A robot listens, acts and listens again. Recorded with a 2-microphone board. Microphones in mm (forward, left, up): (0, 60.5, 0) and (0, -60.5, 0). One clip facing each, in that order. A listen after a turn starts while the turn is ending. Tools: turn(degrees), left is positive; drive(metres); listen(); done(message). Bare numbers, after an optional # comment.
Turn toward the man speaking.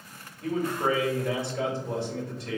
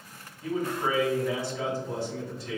# The man speaking: about 55° left or 125° left.
turn(55)
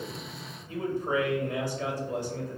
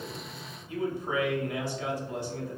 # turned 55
# So it is at 60° left.
turn(60)
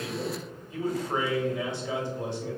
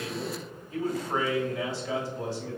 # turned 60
# The man speaking is now 20° left.
turn(20)
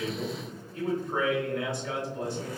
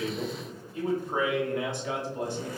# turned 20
done("Facing the man speaking.")